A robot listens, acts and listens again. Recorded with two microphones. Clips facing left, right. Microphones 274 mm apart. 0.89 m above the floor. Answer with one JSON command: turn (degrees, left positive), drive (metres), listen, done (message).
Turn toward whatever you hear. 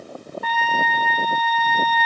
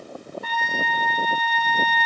{"turn": 75}
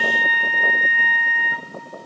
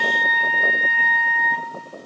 {"done": "Facing the trumpet."}